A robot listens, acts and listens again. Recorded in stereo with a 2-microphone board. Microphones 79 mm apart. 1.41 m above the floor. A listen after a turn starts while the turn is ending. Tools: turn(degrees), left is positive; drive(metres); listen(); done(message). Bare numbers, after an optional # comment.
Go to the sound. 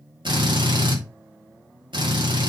turn(-90)
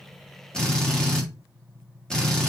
# So it is at 10° left.
turn(10)
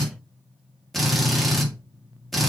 drive(1.0)
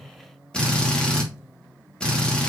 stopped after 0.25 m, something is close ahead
# The drill is now 10° left.
turn(10)
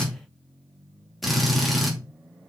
done("Something is in my way. I am facing the drill but have not reached it.")